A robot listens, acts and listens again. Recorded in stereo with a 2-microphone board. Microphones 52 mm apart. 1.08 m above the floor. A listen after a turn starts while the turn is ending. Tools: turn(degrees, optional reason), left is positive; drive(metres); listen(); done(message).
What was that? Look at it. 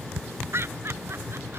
turn(degrees=-45, reason="The laughter: about 45° right or 135° right.")
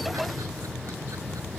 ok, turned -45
listen()
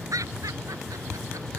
turn(degrees=-85, reason="So it is at 85° right.")
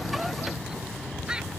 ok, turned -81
turn(degrees=-15, reason="The laughter is now 15° right.")
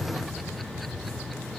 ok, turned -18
listen()
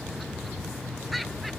listen()
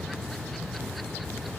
done("I heard laughter from this way, but can't make it out now.")